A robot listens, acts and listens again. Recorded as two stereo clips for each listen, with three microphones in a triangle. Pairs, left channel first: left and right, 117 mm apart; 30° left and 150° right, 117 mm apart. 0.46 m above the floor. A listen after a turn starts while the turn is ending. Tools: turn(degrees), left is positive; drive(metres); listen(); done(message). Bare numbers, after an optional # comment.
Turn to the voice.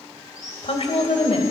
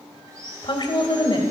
# The woman speaking: 70° left.
turn(70)
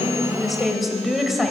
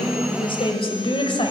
done("Facing the woman speaking, 1 to 2 m away.")